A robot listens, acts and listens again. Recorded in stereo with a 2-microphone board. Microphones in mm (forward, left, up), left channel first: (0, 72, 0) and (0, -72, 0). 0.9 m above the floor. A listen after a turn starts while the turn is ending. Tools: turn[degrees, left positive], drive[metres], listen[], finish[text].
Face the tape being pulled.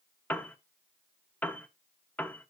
Action: listen[]
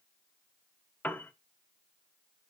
Action: listen[]
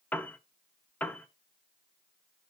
Action: finish[I can't make out tape being pulled, only a piano.]